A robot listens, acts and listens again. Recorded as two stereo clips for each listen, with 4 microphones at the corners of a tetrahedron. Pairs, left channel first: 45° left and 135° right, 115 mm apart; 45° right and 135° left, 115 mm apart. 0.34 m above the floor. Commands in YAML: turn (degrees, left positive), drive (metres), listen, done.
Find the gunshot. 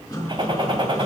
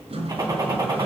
turn: -175
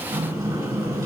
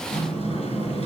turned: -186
turn: 10
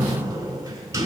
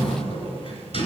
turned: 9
done: "I heard a gunshot from this way, but can't make it out now."